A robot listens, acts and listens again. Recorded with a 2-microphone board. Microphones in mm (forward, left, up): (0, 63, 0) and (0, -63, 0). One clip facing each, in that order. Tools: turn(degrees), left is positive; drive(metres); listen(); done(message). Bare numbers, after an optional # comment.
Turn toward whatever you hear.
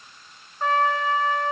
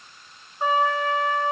turn(-30)
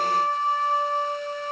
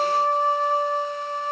# So it is at 135° right.
turn(-135)
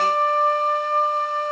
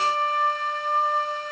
# The trumpet is now 40° left.
turn(40)
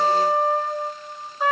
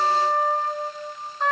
done("Facing the trumpet, under 1 m away.")